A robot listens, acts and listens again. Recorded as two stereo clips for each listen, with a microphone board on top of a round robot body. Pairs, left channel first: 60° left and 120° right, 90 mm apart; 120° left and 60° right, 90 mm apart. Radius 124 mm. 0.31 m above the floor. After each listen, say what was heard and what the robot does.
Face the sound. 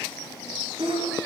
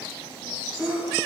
The sneeze: 145° right. Turn 145° right.
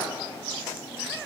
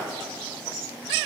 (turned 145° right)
I heard a sneeze from this way, but can't make it out now.